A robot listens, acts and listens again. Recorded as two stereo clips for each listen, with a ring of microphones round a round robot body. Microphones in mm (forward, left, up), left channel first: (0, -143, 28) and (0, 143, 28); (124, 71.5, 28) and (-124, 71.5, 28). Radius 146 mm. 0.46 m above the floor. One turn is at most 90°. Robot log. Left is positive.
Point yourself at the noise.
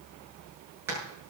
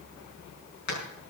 note: The hammering: 10° left.
cmd yaw +10
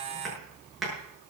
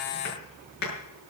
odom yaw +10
end: Facing the hammering, over 4 m away.